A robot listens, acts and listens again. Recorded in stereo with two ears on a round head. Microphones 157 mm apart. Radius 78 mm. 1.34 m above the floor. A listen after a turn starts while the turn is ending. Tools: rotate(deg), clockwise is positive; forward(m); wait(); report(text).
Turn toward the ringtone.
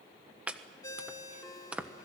rotate(-25)
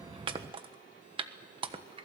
wait()
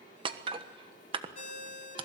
rotate(-130)
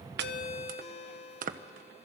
rotate(-40)
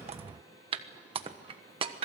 wait()
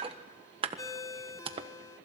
rotate(-20)
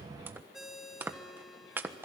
report("Facing the ringtone.")